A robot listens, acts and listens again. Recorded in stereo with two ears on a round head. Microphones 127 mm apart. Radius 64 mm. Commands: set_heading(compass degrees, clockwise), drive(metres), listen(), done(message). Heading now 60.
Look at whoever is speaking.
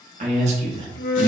set_heading(95)
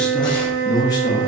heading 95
set_heading(60)
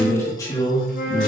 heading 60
set_heading(25)
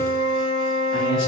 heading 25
listen()
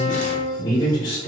set_heading(355)
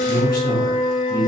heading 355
set_heading(330)
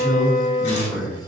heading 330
set_heading(320)
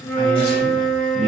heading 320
done("Found it: a man speaking, straight ahead, 2 to 4 m away.")